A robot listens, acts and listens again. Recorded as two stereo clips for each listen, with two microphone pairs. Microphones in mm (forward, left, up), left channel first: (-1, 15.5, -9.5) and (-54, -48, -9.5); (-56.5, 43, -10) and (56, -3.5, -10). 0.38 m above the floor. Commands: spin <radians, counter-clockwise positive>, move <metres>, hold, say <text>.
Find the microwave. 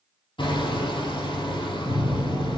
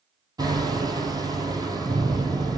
say Facing the microwave.